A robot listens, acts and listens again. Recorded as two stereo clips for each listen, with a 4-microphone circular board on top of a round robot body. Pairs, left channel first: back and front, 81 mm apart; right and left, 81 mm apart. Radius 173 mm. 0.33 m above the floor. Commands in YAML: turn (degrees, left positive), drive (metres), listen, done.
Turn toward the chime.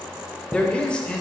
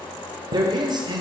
turn: 75
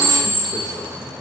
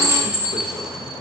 done: "Found it: a chime, straight ahead."